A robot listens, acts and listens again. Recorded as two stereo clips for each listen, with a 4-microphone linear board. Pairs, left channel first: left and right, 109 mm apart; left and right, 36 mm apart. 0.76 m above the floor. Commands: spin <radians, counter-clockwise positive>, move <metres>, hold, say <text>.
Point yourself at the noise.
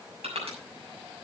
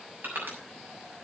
spin -1.22
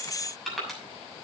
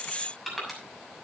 say Found it: crushing, straight ahead.